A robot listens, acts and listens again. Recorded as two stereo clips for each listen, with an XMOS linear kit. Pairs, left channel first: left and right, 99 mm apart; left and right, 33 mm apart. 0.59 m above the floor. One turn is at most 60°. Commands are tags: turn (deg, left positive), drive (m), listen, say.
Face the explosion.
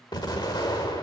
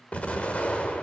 <turn deg="45"/>
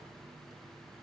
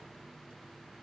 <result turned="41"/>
<listen/>
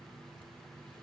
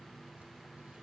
<say>I heard an explosion, but can't make it out now. It was about straight ahead or 95° left.</say>